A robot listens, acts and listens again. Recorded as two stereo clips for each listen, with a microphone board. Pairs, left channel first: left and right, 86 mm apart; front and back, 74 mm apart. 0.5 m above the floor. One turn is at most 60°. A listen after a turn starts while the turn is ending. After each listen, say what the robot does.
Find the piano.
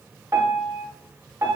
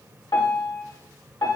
Turn 30° right.
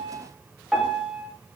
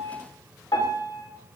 Facing the piano, under 1 m away.